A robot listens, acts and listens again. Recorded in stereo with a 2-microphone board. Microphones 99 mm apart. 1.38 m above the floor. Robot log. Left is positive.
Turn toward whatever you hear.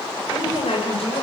cmd yaw +90
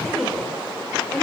end: Facing the woman speaking.